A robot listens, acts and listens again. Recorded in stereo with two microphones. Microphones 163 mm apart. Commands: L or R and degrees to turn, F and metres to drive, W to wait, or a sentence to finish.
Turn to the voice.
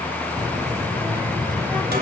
R25
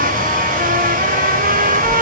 Facing the child speaking.